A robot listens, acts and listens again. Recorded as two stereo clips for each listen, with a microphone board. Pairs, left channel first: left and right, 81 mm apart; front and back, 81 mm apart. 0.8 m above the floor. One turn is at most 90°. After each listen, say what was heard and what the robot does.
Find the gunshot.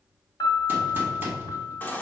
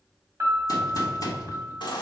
The gunshot: 25° right. Turn 25° right.
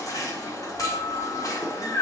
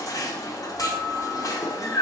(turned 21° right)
I heard a gunshot from this way, but can't make it out now.